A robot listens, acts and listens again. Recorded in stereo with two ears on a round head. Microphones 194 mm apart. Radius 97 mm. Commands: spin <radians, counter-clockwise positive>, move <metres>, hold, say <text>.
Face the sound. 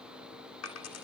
spin 1.57
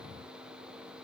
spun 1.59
say Facing where the dropped coin came from. I can't hear it now.